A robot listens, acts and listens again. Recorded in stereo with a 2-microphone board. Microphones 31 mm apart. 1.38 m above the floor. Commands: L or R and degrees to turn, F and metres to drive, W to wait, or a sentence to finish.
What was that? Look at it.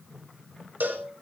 R90
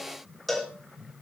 Facing the cowbell.